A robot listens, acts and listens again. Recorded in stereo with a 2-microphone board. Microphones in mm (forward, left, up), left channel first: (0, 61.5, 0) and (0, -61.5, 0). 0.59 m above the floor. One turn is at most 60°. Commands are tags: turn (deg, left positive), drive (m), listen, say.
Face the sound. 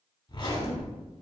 <turn deg="40"/>
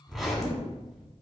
<say>Facing the zipper, under 1 m away.</say>